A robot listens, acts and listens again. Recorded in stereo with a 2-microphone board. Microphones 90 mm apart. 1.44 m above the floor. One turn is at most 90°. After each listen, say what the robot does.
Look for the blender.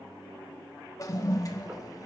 Keep listening.
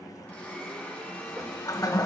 Turn 30° left.
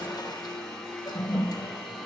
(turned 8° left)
Turn 30° left.
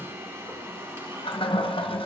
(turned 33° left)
Turn 30° right.
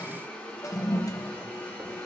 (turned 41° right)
Turn 15° left.
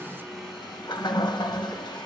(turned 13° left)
Found it: a blender, straight ahead.